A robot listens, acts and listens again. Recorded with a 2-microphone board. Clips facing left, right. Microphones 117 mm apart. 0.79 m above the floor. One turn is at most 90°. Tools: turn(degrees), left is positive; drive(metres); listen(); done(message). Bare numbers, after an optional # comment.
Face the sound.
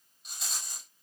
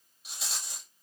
turn(-30)
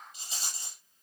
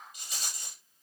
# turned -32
# So it is at 30° left.
turn(30)
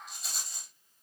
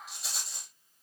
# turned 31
done("Facing the rattle.")